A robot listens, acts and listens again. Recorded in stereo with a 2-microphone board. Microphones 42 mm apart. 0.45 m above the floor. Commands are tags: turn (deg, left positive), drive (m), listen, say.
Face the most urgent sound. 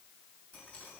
<listen/>
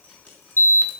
<turn deg="60"/>
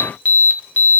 <turn deg="45"/>
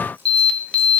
<turn deg="25"/>
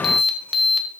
<say>Found it: an alarm, straight ahead.</say>